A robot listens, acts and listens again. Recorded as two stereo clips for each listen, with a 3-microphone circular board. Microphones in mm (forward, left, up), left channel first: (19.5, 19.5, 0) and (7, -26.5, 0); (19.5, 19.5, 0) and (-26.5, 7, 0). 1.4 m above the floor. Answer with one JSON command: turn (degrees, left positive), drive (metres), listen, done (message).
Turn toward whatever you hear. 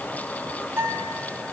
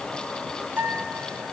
{"turn": -125}
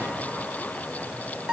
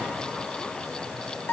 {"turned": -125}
{"turn": -35}
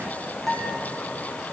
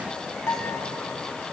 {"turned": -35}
{"done": "Found it: a guitar, straight ahead, 2 to 4 m away."}